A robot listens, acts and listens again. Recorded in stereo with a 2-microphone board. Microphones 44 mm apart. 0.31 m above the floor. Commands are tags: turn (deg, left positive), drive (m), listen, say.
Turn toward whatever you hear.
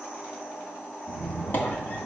<turn deg="55"/>
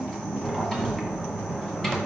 <say>Facing the squeak, 2 to 4 m away.</say>